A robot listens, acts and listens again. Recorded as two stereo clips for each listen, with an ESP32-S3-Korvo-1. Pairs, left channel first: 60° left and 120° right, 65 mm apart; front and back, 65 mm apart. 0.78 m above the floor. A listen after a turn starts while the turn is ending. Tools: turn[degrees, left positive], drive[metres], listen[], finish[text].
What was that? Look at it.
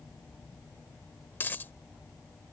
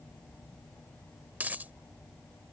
Thought: The dropped coin: 120° left.
Action: turn[120]
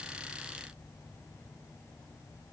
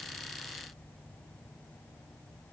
Action: finish[I heard a dropped coin from this way, but can't make it out now.]